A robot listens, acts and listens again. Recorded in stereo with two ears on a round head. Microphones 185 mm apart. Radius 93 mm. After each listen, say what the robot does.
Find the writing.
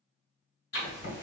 Turn 50° left.
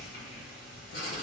Turn 55° left.
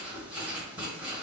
Turn 10° right.
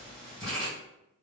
Found it: writing, straight ahead.